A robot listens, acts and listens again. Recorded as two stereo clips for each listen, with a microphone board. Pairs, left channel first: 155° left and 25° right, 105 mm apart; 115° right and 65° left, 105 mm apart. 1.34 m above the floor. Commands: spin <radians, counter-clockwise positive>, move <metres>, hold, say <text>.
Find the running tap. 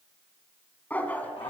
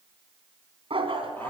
hold
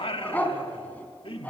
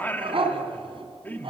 hold
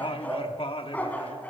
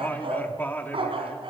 say I can't make out a running tap, only a dog barking and singing.